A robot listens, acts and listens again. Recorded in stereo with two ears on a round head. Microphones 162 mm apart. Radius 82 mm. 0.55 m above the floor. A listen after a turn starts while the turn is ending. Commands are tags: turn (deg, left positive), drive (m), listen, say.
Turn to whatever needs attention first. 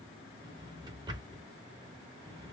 <listen/>
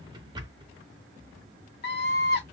<turn deg="60"/>
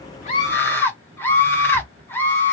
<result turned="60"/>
<turn deg="15"/>
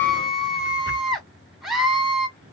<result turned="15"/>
<say>Facing the scream, 1 to 2 m away.</say>